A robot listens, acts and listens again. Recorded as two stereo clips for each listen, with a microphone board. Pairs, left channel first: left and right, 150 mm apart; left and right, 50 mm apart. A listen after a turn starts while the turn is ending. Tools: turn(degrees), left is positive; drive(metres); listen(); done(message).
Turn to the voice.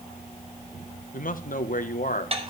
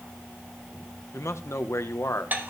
turn(degrees=65)
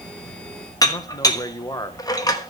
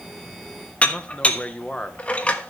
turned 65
turn(degrees=30)
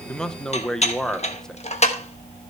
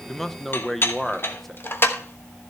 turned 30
done("Facing the man speaking, 1 to 2 m away.")